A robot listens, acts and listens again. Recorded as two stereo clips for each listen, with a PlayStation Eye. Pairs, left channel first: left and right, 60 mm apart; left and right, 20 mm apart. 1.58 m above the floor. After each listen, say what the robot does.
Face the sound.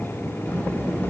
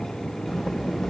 Turn 25° left.
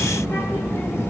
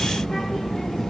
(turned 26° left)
Turn 135° left.
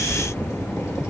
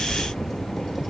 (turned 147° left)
Turn 15° right.
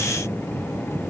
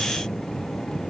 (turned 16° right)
Keep listening.
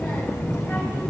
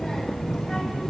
Found it: a child speaking, straight ahead.